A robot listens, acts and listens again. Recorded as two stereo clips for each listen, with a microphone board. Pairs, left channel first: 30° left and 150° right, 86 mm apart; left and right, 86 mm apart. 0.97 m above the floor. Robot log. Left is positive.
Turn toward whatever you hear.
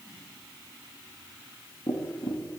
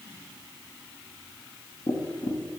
note: The tapping: 85° left.
cmd yaw +85
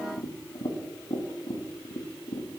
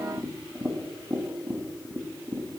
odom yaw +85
end: Facing the tapping, under 1 m away.